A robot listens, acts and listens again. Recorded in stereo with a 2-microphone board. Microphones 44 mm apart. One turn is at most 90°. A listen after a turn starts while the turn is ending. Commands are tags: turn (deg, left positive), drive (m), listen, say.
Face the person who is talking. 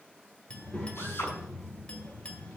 <turn deg="35"/>
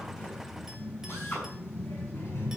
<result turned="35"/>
<turn deg="90"/>
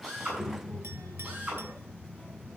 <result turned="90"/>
<turn deg="20"/>
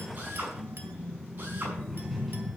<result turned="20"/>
<say>Found it: a child speaking, straight ahead, 2 to 4 m away.</say>